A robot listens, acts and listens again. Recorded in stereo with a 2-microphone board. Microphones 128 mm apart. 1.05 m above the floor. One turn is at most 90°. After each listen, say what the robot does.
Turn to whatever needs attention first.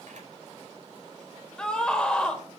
Turn 30° left.
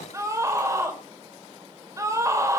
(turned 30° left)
Turn 25° right.
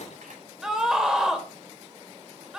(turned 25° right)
Facing the scream.